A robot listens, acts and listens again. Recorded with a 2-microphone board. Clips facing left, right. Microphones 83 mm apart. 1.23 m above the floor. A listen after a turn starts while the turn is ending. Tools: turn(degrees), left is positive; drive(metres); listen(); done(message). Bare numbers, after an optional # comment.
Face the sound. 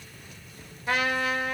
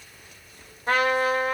# The trumpet: about 50° right or 130° right.
turn(-50)
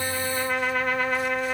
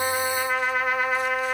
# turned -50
# So it is at 10° right.
turn(-10)
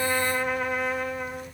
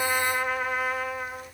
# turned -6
done("Facing the trumpet.")